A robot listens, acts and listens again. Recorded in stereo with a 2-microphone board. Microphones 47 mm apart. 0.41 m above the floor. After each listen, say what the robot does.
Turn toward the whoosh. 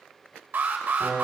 Keep listening.
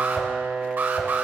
Turn 65° left.
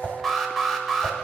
Turn 35° left.
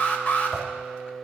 Turn 10° right.
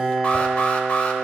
Keep listening.
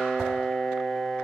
Found it: a whoosh, straight ahead.